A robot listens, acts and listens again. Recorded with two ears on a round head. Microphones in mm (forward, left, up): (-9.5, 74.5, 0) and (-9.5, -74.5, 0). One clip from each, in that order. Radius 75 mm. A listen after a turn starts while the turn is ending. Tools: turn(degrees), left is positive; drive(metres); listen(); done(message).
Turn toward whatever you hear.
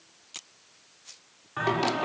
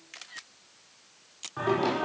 turn(degrees=65)
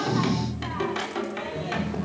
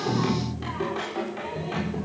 turn(degrees=40)
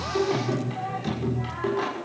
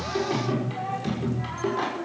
done("Facing the singing, over 4 m away.")